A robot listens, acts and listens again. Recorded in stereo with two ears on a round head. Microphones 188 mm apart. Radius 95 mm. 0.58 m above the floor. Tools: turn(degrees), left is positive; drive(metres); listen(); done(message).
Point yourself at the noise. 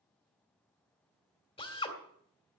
turn(degrees=25)
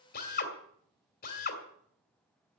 turn(degrees=125)
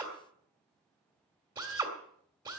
turn(degrees=-20)
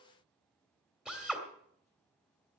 done("Facing the drill.")